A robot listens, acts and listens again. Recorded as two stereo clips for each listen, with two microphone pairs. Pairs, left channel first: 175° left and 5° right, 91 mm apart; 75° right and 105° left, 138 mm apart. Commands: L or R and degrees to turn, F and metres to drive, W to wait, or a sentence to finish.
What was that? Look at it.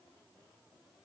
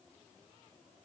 W
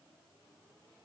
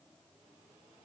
W
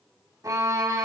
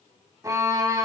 L40
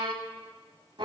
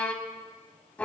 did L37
Facing the violin, 1 to 2 m away.